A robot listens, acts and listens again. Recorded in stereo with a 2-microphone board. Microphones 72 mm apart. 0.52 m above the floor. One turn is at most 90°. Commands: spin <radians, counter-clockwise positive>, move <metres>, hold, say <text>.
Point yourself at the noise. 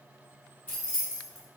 spin 0.44
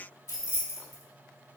spin 1.57
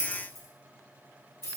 spin 0.87
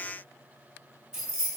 spin -0.26
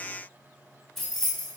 say Found it: keys jangling, straight ahead.